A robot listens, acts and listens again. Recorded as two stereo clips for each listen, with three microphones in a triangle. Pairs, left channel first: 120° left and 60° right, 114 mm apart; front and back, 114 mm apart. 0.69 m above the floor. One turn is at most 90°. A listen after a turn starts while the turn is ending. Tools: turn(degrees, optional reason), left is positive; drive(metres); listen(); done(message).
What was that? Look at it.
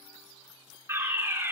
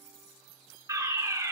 turn(degrees=-90, reason="The fire alarm: 125° right.")
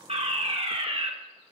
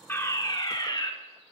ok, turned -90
turn(degrees=-45, reason="The fire alarm is now 45° right.")
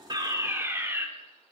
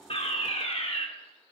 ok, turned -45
done("Facing the fire alarm, 2 to 4 m away.")